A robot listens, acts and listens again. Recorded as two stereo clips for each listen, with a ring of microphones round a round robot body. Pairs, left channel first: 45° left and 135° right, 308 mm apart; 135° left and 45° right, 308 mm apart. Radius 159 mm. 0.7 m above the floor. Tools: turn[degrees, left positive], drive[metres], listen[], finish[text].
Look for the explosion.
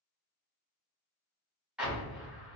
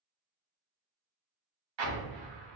Thought: The explosion: 50° right.
Action: turn[-50]
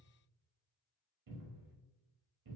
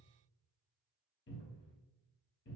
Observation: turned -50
Action: finish[Facing where the explosion came from. I can't hear it now.]